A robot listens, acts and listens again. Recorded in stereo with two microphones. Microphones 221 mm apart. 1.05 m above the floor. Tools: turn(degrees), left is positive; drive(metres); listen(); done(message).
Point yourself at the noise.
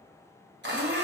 turn(degrees=-50)
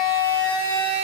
turn(degrees=-75)
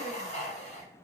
turn(degrees=30)
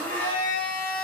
turn(degrees=10)
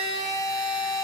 done("Facing the blender, under 1 m away.")